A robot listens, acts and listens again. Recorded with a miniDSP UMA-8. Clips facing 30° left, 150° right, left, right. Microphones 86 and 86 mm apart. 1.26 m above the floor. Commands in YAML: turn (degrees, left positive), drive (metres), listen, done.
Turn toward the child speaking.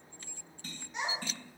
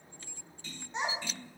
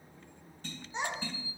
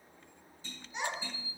turn: 155
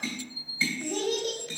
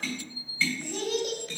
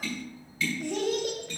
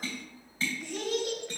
turn: 75
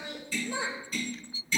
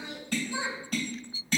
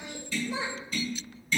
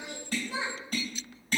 done: "Found it: a child speaking, straight ahead, 2 to 4 m away."